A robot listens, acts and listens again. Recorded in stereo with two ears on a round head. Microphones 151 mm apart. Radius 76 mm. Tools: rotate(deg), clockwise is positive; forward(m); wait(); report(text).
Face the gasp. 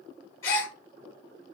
rotate(-15)
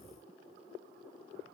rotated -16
wait()
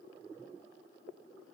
report("I heard a gasp, but can't make it out now. It was about straight ahead or 150° left.")